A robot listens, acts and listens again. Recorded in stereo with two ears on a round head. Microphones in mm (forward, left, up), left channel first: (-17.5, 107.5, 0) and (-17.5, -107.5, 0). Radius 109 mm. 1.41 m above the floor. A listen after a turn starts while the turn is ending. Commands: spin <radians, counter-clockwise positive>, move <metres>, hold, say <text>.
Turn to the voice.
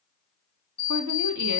spin -1.57
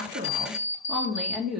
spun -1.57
say Facing the woman speaking, 2 to 4 m away.